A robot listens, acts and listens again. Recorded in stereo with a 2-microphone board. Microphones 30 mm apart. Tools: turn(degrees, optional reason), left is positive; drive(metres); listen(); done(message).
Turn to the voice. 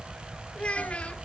turn(degrees=40, reason="The child speaking: about 40° left or 140° left.")
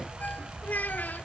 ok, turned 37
turn(degrees=100, reason="So it is at 100° left.")
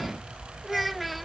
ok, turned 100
done("Found it: a child speaking, straight ahead.")